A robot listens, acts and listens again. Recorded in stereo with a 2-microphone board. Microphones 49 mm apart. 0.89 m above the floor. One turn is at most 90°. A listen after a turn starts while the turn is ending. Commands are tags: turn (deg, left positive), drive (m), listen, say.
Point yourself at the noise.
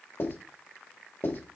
<turn deg="55"/>
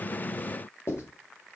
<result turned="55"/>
<turn deg="65"/>
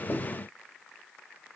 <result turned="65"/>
<listen/>
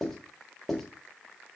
<say>Found it: writing, straight ahead, 2 to 4 m away.</say>